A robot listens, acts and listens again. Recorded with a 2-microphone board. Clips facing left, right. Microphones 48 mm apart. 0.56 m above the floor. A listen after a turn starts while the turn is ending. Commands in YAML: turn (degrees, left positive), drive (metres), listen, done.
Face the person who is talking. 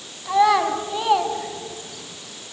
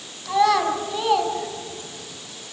turn: 30
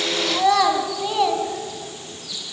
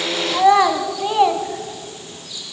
turn: -20
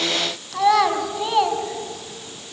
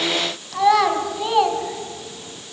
done: "Found it: a child speaking, straight ahead."